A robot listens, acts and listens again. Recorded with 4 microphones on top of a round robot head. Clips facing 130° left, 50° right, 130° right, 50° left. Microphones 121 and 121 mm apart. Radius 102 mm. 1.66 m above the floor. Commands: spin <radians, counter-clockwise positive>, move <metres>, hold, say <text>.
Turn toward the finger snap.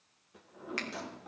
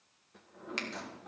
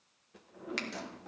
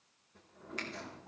spin -2.01
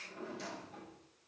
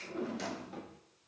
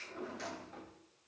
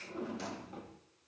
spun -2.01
hold
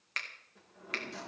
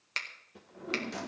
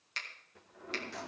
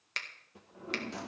spin 0.17
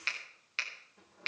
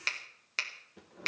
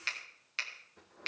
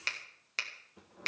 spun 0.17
say Facing the finger snap, 2 to 4 m away.